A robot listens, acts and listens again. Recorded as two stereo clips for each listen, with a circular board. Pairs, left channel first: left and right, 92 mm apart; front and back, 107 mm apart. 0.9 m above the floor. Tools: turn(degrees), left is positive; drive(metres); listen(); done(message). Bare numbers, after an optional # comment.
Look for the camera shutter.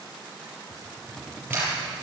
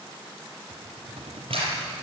# The camera shutter: 155° right.
turn(-155)
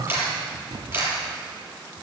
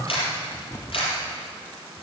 # The camera shutter is now 25° right.
turn(-25)
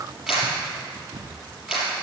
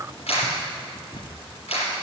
# The camera shutter is now 10° right.
turn(-10)
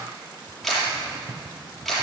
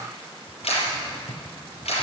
done("Facing the camera shutter, over 4 m away.")